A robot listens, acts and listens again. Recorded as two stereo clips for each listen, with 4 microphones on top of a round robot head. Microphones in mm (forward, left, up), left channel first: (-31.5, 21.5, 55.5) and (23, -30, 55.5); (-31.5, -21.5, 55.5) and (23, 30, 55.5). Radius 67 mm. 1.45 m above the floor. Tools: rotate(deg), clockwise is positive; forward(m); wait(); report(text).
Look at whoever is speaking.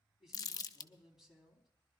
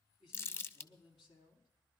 rotate(130)
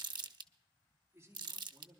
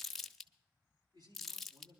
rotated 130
rotate(-10)
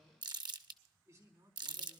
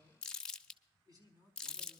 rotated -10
report("Found it: a man speaking, straight ahead.")